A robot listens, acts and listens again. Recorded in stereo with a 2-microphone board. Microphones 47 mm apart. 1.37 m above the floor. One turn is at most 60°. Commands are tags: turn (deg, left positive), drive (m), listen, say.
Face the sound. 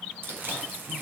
<turn deg="-60"/>
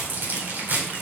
<turn deg="-55"/>
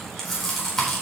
<say>Found it: chewing, straight ahead, over 4 m away.</say>